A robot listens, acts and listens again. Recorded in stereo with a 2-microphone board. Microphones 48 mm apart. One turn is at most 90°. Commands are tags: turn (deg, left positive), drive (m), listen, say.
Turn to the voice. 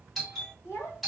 <turn deg="65"/>
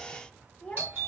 <turn deg="25"/>
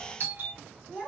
<turn deg="-15"/>
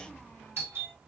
<listen/>
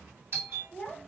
<say>Found it: a child speaking, straight ahead, 1 to 2 m away.</say>